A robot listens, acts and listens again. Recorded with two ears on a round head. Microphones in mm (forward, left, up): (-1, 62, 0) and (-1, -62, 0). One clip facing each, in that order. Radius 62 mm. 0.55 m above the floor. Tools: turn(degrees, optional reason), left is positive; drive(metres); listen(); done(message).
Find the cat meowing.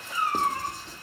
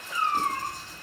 turn(degrees=30)
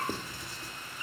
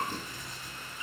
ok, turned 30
turn(degrees=150, reason="So it is at 150° left.")
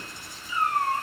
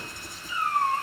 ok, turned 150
turn(degrees=45, reason="The cat meowing is now 45° left.")
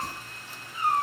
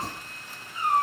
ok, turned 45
done("Found it: a cat meowing, straight ahead.")